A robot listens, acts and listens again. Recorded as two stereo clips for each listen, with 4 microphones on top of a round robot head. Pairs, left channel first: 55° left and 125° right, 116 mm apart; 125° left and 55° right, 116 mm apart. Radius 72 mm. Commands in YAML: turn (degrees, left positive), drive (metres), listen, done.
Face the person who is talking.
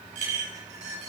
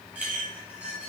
listen: true
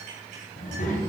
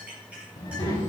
turn: 65
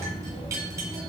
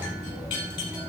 turn: 10
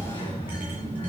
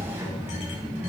done: "Found it: a child speaking, straight ahead, 2 to 4 m away."